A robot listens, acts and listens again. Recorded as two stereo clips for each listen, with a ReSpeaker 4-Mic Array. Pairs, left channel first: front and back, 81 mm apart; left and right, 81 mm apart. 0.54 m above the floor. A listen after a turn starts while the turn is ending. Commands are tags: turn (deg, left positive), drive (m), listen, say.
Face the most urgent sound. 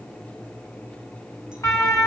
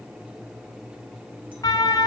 <turn deg="45"/>
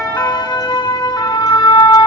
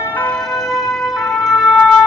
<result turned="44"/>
<say>Found it: a siren, straight ahead.</say>